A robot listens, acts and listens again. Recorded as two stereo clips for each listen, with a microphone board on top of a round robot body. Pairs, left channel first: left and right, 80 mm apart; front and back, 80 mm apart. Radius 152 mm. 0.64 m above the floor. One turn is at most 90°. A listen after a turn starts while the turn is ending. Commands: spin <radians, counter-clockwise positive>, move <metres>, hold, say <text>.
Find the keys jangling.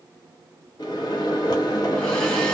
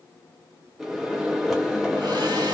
hold
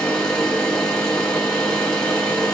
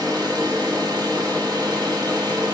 hold
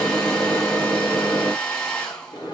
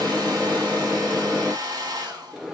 say I can't make out keys jangling to turn to.